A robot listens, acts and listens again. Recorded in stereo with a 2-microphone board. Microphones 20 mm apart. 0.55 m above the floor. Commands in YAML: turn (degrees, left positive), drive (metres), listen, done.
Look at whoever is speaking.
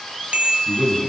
turn: -55
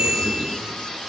listen: true
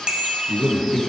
done: "Facing the man speaking, over 4 m away."